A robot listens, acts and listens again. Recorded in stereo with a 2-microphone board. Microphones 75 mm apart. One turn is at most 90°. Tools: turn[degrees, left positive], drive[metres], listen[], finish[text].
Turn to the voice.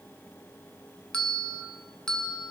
Action: listen[]
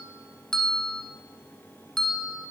Action: listen[]
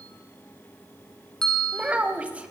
Thought: The child speaking: about 15° right or 165° right.
Action: turn[-15]
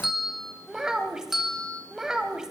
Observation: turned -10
Action: turn[-30]
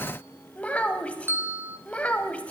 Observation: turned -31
Thought: So it is at 20° left.
Action: turn[20]
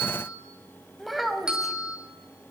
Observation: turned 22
Action: finish[Found it: a child speaking, straight ahead, under 1 m away.]